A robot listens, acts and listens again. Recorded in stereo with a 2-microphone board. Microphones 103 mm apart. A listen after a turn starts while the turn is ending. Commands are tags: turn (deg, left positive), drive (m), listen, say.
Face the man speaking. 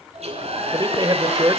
<turn deg="-40"/>
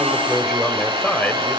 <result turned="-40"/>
<turn deg="15"/>
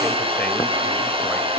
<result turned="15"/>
<listen/>
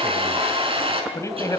<turn deg="30"/>
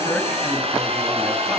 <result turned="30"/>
<listen/>
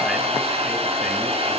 <listen/>
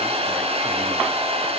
<say>I heard a man speaking from this way, but can't make it out now.</say>